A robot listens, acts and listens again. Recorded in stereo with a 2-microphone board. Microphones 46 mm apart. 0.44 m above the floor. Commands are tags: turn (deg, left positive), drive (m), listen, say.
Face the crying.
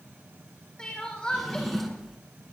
<turn deg="20"/>
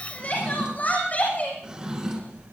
<turn deg="140"/>
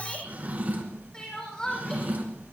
<turn deg="20"/>
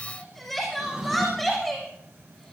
<say>Facing the crying.</say>